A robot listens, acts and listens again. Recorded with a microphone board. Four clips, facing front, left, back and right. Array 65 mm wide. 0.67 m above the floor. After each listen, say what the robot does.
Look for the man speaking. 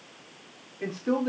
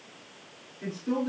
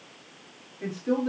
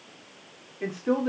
Turn 60° right.
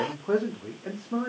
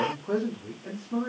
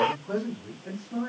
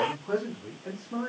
Turn 15° right.
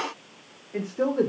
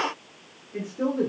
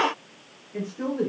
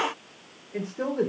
Turn 25° right.
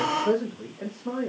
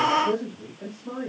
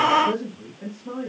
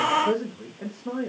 Turn 25° right.
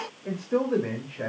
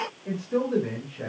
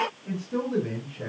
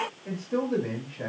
Facing the man speaking.